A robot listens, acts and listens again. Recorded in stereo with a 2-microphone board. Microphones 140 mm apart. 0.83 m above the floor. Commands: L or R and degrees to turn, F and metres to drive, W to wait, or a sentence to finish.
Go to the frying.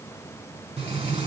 R50
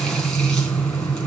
F1.0
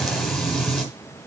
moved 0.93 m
F1.0
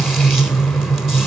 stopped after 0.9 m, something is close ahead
Arrived at the frying, straight ahead.